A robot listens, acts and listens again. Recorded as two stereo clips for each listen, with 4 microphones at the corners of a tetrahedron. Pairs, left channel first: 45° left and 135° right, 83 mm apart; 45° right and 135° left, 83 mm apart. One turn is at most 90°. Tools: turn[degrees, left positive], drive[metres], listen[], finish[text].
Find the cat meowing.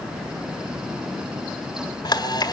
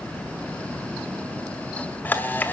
Action: listen[]
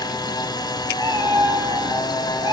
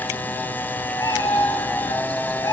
Thought: The cat meowing: 90° right.
Action: turn[-90]
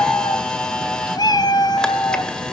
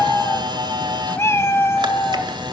Thought: The cat meowing is now 15° left.
Action: turn[15]
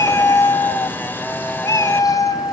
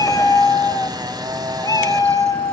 Action: finish[Facing the cat meowing, 1 to 2 m away.]